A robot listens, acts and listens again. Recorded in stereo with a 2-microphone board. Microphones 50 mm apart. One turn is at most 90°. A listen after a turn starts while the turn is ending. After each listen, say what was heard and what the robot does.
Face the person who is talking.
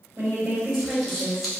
The woman speaking: about 55° right or 125° right. Turn 55° right.
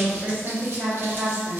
So it is at 65° right. Turn 65° right.
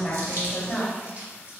The woman speaking is now 30° left. Turn 30° left.
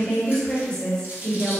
The woman speaking is now 20° left. Turn 20° left.
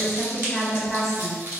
Facing the woman speaking, 1 to 2 m away.